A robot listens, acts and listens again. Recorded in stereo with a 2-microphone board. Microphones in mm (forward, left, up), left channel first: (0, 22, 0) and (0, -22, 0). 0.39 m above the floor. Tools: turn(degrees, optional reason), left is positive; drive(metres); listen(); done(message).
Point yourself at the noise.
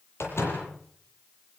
turn(degrees=90)
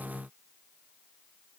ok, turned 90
done("Facing where the door slam came from. I can't hear it now.")